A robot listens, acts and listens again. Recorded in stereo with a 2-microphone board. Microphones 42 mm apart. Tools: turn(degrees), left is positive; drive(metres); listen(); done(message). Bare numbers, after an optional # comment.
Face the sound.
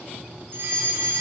# The fire alarm: about 55° right or 125° right.
turn(-55)
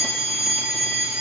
done("Found it: a fire alarm, straight ahead, over 4 m away.")